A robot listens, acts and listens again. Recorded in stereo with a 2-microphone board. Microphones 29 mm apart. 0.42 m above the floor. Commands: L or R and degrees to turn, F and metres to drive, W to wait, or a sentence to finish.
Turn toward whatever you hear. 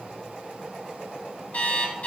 L55
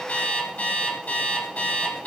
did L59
L65
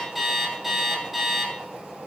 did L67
Facing the alarm clock.